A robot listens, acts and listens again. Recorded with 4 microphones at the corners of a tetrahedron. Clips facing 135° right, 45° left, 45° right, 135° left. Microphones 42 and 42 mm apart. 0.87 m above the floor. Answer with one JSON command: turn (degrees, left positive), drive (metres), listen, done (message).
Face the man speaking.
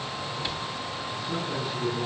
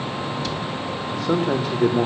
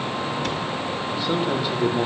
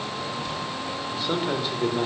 {"turn": 40}
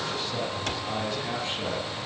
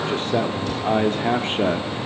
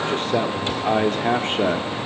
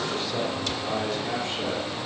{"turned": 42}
{"done": "Found it: a man speaking, straight ahead."}